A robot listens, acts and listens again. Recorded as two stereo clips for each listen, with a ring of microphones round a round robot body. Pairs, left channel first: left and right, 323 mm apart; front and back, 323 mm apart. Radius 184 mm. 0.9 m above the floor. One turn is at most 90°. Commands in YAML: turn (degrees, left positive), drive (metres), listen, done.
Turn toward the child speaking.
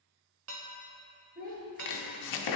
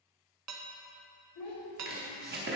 turn: -30
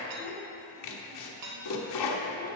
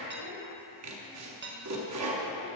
listen: true
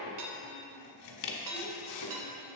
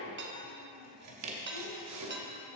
listen: true
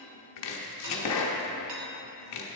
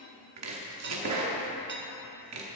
done: "I heard a child speaking from this way, but can't make it out now."